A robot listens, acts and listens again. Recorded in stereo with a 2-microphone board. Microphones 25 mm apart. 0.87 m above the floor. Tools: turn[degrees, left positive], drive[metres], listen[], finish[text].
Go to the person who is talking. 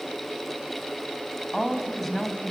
Action: turn[30]
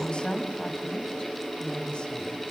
Thought: So it is at 140° left.
Action: turn[140]
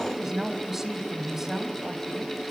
Thought: The woman speaking is now 10° right.
Action: turn[-10]
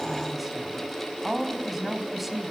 Action: drive[1.0]
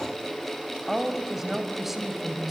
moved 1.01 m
Thought: The woman speaking is now 10° right.
Action: turn[-10]
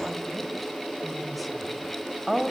Action: drive[1.0]
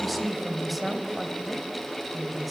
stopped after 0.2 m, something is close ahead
Action: finish[Blocked. The woman speaking is further on, straight ahead.]